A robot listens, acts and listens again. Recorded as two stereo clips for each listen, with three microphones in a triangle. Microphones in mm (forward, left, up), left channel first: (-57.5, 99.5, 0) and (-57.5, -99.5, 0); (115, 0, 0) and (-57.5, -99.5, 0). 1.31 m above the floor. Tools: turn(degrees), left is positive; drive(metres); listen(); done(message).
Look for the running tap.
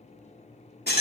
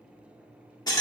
listen()
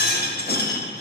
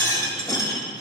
listen()
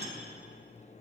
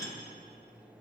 done("I can't make out a running tap, only a rattle.")